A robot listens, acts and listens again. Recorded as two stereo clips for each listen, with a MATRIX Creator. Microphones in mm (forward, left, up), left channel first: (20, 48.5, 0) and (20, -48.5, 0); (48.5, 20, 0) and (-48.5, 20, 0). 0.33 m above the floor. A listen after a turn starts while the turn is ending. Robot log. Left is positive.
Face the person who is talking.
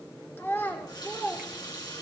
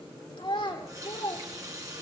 note: The child speaking: 25° left.
cmd yaw +25
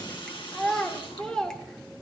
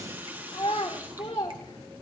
end: Found it: a child speaking, straight ahead, 2 to 4 m away.